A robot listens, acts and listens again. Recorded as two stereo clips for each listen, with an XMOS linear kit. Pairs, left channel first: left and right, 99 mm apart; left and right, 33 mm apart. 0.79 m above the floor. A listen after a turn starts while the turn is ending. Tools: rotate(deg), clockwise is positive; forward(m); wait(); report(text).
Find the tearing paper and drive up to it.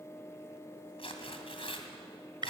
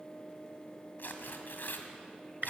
rotate(-65)
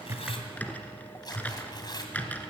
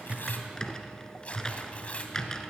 rotate(-45)
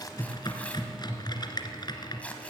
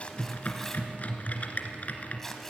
rotate(-15)
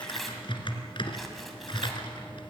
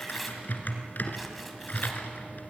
wait()
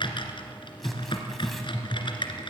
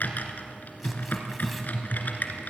wait()
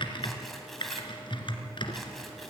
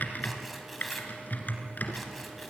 report("I heard tearing paper from this way, but can't make it out now. I did not reach it.")